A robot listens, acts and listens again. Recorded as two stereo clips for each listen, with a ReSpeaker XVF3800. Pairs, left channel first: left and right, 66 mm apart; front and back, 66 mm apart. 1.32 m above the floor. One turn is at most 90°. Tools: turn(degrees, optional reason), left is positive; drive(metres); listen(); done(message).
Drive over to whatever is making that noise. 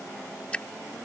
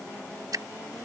turn(degrees=90, reason="The dripping: 160° left.")
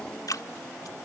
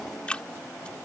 turn(degrees=75, reason="The dripping is now 75° left.")
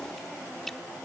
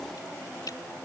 listen()
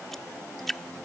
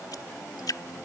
drive(metres=1.0)
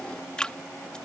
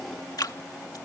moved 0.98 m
turn(degrees=15, reason="The dripping is now 15° left.")
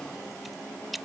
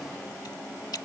drive(metres=1.0)
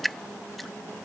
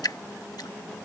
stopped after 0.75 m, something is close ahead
done("Arrived at the dripping, straight ahead.")